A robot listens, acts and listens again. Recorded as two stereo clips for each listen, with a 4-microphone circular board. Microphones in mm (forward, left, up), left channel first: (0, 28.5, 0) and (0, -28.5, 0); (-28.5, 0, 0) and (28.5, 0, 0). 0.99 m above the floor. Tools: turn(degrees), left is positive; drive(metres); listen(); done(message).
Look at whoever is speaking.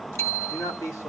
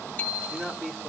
turn(degrees=85)
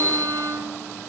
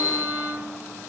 listen()
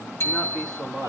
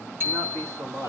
turn(degrees=15)
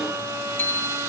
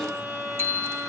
listen()
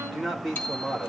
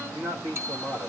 done("Facing the man speaking, 2 to 4 m away.")